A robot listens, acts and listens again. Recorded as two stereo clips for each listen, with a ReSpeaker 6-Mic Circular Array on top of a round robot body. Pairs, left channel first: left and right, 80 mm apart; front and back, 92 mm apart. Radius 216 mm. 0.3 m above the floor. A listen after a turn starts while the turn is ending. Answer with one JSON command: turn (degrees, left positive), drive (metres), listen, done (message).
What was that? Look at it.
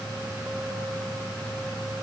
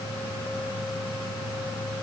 {"listen": true}
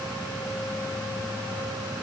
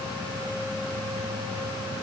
{"listen": true}
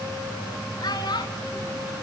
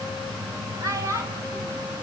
{"turn": 125}
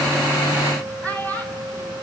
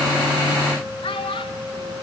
{"turn": 20}
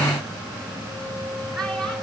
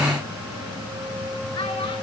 {"listen": true}
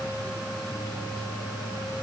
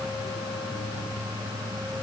{"listen": true}
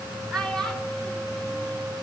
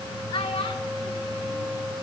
{"done": "Facing the child speaking."}